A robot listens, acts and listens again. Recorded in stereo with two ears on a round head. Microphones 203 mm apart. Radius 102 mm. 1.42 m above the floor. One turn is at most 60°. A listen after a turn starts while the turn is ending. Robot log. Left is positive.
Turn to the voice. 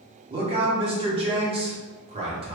note: The man speaking: about 25° right or 155° right.
cmd yaw -25
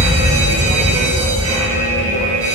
cmd idle
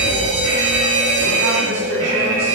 cmd idle
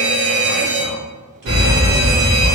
end: I heard a man speaking, but can't make it out now. It was about straight ahead or 130° right.